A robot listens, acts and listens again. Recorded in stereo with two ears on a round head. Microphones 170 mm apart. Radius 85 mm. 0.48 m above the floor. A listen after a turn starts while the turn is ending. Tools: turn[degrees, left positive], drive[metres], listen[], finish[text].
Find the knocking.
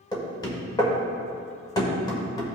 Thought: The knocking: about 20° left or 160° left.
Action: turn[20]
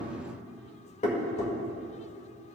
Thought: So it is at 135° left.
Action: turn[135]
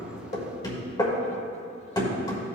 Thought: The knocking is now 25° left.
Action: turn[25]
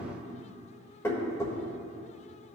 Thought: The knocking is now 20° left.
Action: turn[20]
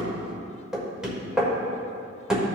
Action: finish[Facing the knocking.]